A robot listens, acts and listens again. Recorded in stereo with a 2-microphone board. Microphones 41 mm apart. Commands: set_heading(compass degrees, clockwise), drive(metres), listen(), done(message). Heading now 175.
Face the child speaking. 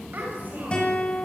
set_heading(225)
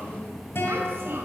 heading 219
set_heading(294)
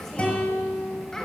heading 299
set_heading(289)
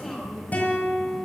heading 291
done("Found it: a child speaking, straight ahead, over 4 m away.")